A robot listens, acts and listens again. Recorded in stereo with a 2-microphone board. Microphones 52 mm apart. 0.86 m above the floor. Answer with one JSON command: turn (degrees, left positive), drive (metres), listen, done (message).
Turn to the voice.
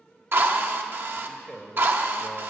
{"turn": 30}
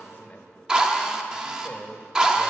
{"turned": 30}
{"turn": 140}
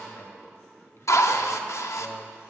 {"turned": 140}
{"turn": 60}
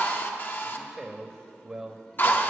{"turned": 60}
{"turn": -15}
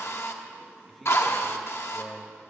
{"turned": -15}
{"done": "Found it: a man speaking, straight ahead, 1 to 2 m away."}